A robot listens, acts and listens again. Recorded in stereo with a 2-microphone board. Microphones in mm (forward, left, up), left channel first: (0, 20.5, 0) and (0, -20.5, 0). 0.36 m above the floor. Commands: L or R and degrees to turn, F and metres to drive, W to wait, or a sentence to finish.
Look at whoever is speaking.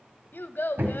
L60
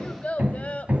L45
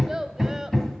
R15
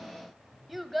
Found it: a child speaking, straight ahead.